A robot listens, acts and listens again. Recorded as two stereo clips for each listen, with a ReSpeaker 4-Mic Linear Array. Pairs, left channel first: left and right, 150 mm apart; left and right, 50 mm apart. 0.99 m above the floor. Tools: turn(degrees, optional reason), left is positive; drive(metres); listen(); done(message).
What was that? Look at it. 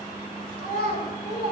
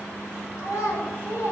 turn(degrees=90)
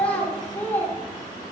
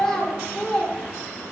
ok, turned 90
turn(degrees=15, reason="So it is at 15° left.")
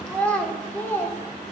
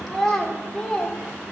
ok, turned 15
turn(degrees=15, reason="The child speaking is now 15° left.")
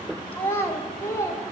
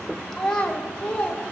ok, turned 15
turn(degrees=20, reason="The child speaking is now 20° left.")
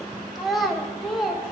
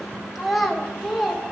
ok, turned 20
done("Found it: a child speaking, straight ahead.")